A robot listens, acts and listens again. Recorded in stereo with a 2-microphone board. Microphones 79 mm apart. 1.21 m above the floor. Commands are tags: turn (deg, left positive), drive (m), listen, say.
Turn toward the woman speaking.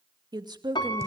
<turn deg="-65"/>
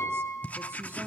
<listen/>
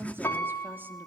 <turn deg="-30"/>
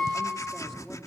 <listen/>
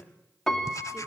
<listen/>
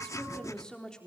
<turn deg="10"/>
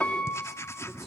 <listen/>
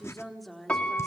<say>Facing the woman speaking.</say>